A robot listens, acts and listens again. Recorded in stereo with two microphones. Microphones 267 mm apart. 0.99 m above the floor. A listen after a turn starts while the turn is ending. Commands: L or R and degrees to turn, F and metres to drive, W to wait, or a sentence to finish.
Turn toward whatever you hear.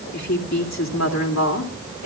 L90
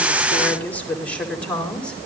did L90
Facing the woman speaking.